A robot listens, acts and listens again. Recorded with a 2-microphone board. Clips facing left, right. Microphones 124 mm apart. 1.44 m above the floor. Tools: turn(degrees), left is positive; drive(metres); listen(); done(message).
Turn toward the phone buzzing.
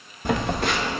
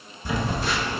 turn(degrees=60)
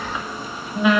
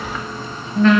turn(degrees=10)
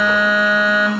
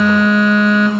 done("Found it: a phone buzzing, straight ahead, 1 to 2 m away.")